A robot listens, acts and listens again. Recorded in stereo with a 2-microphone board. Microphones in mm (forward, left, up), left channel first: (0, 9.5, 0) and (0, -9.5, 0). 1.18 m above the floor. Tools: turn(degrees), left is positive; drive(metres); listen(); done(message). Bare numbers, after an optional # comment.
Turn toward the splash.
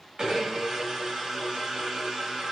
listen()
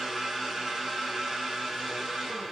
listen()
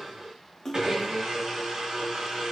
# The splash: about 25° left or 155° left.
turn(25)
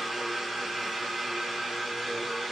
listen()
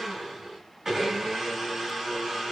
done("I heard a splash, but can't make it out now. It was about straight ahead or 130° left.")